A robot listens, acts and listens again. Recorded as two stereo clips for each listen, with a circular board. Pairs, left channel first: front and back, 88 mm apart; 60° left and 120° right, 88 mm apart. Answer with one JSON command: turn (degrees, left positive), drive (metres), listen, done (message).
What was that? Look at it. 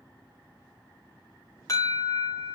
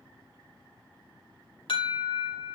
{"turn": 50}
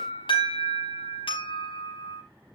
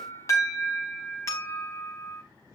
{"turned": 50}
{"done": "Found it: an alarm, straight ahead, over 4 m away."}